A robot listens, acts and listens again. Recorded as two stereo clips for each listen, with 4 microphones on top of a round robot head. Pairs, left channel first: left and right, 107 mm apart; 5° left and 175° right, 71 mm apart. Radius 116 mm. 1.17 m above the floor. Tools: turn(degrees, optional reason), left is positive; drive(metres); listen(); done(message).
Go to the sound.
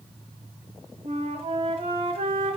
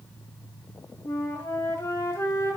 turn(degrees=-60, reason="The flute: 60° right.")
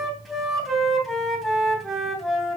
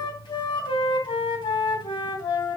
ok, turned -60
drive(metres=1.0)
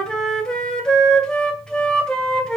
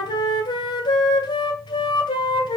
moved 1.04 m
turn(degrees=10, reason="The flute is now 10° left.")
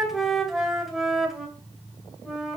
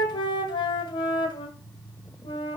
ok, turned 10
drive(metres=1.0)
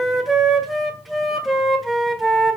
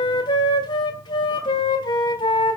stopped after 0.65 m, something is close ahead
done("Arrived at the flute, straight ahead.")